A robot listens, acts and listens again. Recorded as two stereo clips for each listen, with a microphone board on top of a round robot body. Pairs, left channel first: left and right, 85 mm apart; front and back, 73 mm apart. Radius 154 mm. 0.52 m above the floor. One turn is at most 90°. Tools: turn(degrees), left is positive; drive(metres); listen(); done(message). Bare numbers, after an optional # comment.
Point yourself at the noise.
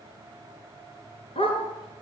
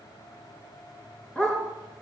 # The dog barking: 80° left.
turn(80)
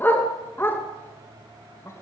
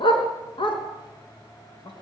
# The dog barking is now 20° left.
turn(20)
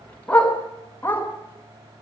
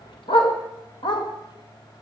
# The dog barking is now 20° left.
turn(20)
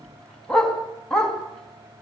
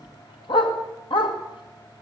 done("Found it: a dog barking, straight ahead.")